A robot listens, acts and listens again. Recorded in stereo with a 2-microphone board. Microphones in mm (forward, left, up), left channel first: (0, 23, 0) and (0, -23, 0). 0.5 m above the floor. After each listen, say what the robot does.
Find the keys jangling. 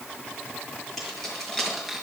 Turn 30° left.
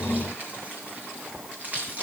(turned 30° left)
Turn 35° right.
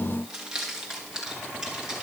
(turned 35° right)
Turn 15° right.
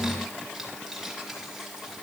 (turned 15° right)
Found it: keys jangling, straight ahead, over 4 m away.